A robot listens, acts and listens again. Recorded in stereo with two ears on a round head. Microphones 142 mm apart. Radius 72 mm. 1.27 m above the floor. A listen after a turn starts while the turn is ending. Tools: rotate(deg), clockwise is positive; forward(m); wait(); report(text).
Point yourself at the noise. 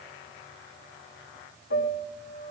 rotate(-90)
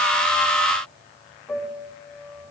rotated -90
report("Facing the piano.")